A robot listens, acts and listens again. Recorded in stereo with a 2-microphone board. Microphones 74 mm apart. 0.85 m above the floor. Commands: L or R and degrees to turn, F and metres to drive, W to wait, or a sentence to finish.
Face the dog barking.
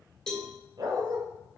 R60
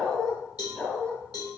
L15
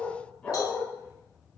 L15
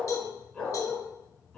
L10
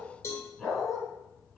Found it: a dog barking, straight ahead.